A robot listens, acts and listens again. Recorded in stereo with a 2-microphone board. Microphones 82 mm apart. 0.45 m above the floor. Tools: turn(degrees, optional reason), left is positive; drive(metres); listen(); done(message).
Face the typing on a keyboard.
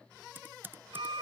turn(degrees=-25, reason="The typing on a keyboard: about 25° right or 155° right.")
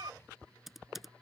done("Facing the typing on a keyboard.")